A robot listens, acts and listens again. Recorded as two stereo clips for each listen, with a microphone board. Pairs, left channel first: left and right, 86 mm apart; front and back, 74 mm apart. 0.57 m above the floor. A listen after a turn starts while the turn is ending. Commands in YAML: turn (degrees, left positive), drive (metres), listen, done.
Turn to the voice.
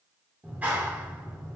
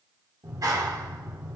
listen: true
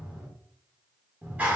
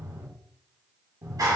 listen: true
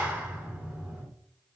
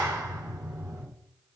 done: "I can't make out anyone speaking to turn to."